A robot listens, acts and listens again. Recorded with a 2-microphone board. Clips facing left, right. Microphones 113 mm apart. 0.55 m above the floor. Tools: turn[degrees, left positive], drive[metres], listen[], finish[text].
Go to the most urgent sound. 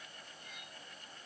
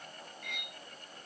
Action: listen[]
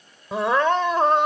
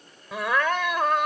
Thought: The crying: about 30° left or 150° left.
Action: turn[30]
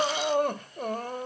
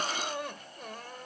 Thought: So it is at 120° left.
Action: turn[120]
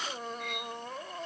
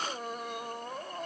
Action: drive[1.0]
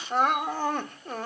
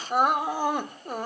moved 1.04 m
Thought: The crying is now 15° right.
Action: turn[-15]
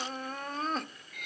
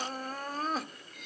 Action: drive[1.0]
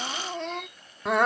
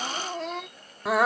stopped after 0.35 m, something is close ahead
Action: finish[Arrived at the crying, straight ahead.]